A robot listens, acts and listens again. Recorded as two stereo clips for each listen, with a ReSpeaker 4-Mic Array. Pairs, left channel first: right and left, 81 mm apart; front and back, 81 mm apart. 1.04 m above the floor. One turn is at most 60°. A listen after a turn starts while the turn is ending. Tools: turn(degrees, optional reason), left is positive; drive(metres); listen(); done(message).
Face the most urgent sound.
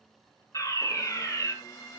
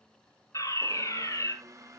turn(degrees=-45, reason="The fire alarm: 45° right.")
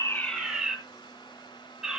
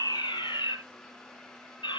done("Facing the fire alarm.")